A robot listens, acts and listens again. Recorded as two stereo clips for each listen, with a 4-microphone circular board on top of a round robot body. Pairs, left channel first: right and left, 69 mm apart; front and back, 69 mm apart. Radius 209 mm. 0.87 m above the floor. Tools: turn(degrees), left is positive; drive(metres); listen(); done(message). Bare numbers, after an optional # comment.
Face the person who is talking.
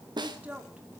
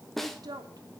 # The woman speaking: 160° left.
turn(160)
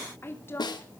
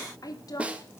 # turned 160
# The woman speaking is now 30° right.
turn(-30)
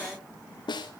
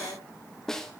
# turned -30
listen()
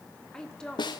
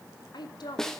# The woman speaking is now 10° right.
turn(-10)
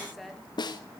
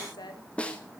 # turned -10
done("Facing the woman speaking, 2 to 4 m away.")